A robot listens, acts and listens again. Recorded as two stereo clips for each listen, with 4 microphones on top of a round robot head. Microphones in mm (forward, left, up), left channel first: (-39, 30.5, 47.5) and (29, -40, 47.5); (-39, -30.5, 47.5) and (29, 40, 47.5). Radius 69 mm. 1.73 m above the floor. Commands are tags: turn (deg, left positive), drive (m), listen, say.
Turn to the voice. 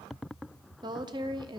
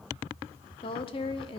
<turn deg="-95"/>
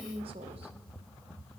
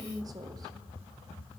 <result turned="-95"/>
<turn deg="-10"/>
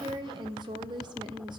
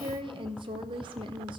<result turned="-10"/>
<say>Found it: a woman speaking, straight ahead.</say>